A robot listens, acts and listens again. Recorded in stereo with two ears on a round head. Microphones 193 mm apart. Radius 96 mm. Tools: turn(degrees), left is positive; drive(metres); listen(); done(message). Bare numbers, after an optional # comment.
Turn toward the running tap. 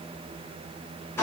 listen()
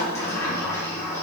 listen()
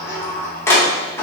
done("I can't make out a running tap to turn to.")